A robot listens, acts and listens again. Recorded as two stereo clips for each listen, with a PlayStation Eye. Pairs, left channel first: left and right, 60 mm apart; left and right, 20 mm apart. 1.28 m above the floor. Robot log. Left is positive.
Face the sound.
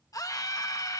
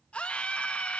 cmd yaw +90
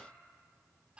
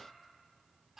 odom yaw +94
note: So it is at 20° right.
cmd yaw -20
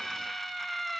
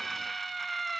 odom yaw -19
end: Facing the scream.